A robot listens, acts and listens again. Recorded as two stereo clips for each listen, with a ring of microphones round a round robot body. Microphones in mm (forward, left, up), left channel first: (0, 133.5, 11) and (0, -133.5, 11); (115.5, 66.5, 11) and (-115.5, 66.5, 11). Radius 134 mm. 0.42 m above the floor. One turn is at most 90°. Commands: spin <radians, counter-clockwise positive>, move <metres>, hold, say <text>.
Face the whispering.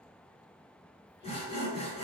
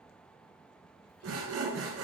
hold
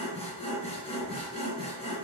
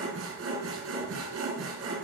hold
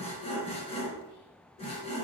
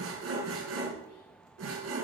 say I can't make out whispering to turn to.